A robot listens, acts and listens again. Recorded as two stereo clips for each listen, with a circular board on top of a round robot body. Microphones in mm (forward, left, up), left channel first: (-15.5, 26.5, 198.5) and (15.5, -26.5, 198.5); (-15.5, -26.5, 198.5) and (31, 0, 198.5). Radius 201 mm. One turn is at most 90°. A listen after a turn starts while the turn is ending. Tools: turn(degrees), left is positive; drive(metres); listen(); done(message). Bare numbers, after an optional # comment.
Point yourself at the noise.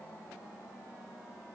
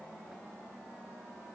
listen()
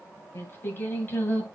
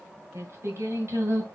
# The singing: 55° left.
turn(55)
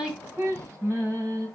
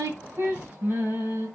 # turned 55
# The singing is now 25° right.
turn(-25)
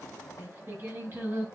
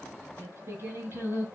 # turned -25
# The singing is now 15° right.
turn(-15)
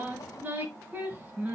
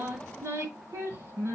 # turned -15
done("Facing the singing, over 4 m away.")